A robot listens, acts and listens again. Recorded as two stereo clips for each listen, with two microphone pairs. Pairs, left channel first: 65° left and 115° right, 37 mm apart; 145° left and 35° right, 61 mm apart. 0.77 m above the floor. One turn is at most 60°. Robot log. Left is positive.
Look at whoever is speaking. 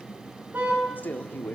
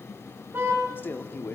note: The man speaking: 90° left.
cmd yaw +60
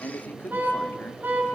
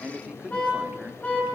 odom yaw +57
note: The man speaking is now 35° left.
cmd yaw +35
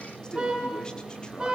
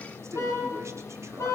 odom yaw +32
cmd idle
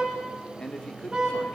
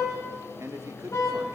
end: Found it: a man speaking, straight ahead, 1 to 2 m away.